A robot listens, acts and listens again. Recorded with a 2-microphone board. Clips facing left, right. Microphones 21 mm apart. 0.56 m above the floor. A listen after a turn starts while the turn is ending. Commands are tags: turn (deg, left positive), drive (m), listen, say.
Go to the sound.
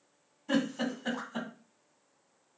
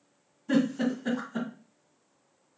<turn deg="30"/>
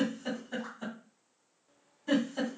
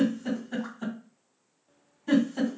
<drive m="1.0"/>
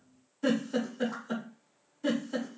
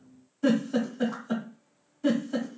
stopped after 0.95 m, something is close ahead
<say>I am next to the giggle.</say>